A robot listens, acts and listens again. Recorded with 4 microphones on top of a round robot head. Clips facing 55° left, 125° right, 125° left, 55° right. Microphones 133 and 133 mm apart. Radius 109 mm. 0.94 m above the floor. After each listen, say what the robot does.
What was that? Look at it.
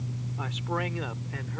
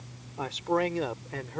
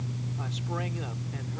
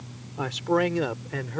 Turn 75° right.
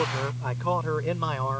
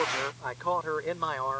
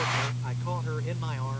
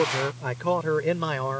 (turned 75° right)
Turn 30° right.
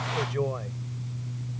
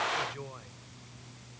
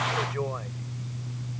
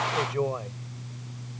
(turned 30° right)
Turn 15° left.
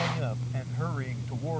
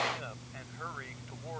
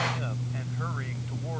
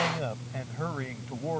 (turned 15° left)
Keep listening.
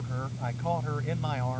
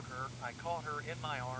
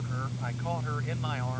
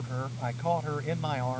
Keep listening.
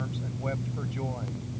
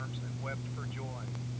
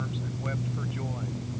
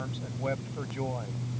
I heard a man speaking from this way, but can't make it out now.